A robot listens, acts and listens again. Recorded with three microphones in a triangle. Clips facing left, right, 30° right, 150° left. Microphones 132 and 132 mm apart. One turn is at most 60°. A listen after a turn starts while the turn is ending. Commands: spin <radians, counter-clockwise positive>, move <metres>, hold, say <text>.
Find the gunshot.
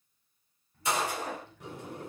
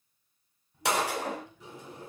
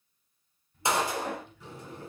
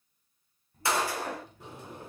spin -1.05
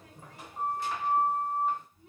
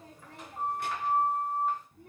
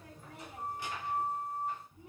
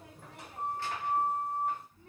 spin -0.70
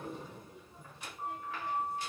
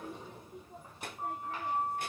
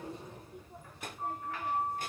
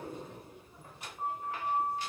say Facing where the gunshot came from. I can't hear it now.